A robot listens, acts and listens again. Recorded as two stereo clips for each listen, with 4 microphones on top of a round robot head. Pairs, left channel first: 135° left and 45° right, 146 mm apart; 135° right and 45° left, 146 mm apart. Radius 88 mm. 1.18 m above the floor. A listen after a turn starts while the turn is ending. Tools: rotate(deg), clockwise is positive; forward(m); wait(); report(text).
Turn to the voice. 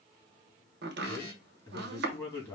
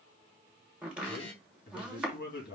rotate(155)
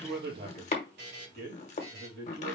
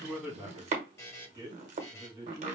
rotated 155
rotate(25)
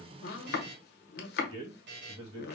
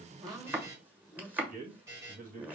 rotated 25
rotate(-10)
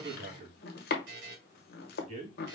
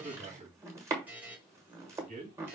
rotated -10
report("Found it: a man speaking, straight ahead, 2 to 4 m away.")